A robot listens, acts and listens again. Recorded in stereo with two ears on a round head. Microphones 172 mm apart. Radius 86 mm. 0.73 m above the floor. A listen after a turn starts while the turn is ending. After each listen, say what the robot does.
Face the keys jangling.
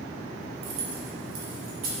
Turn 75° right.
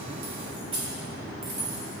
Turn 25° right.
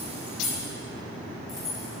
Found it: keys jangling, straight ahead.